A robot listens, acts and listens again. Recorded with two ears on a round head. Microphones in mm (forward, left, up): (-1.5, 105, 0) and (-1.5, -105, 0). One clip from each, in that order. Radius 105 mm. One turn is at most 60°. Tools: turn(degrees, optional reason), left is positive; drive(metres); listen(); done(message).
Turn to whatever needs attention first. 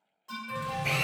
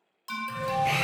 turn(degrees=-60)
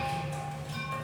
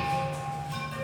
turn(degrees=-20, reason="So it is at 20° right.")
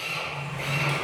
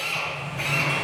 listen()
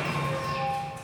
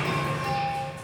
done("Facing the alarm.")